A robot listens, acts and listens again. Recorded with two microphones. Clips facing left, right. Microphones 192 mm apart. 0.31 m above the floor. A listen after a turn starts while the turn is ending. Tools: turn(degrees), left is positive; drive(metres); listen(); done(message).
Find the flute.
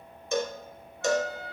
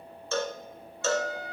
turn(degrees=65)
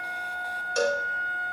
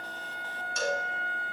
turn(degrees=45)
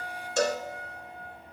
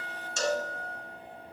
turn(degrees=10)
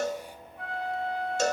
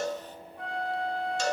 done("Facing the flute, 2 to 4 m away.")